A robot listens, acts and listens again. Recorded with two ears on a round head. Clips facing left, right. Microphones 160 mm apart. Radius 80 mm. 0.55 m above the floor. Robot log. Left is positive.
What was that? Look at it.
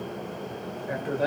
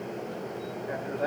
note: The man speaking: about 40° left or 140° left.
cmd yaw +40
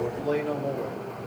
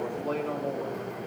note: So it is at 15° left.
cmd yaw +15
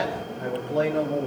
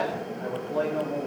note: The man speaking is now 30° left.
cmd yaw +30
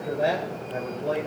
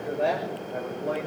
note: The man speaking is now 15° left.
cmd yaw +15
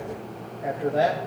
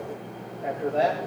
note: The man speaking is now 10° left.
cmd yaw +10
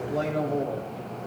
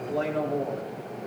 end: Found it: a man speaking, straight ahead, 2 to 4 m away.